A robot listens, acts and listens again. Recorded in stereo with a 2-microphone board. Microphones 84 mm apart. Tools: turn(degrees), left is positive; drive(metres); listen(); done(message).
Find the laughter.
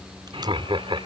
turn(degrees=-90)
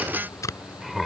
done("Facing the laughter.")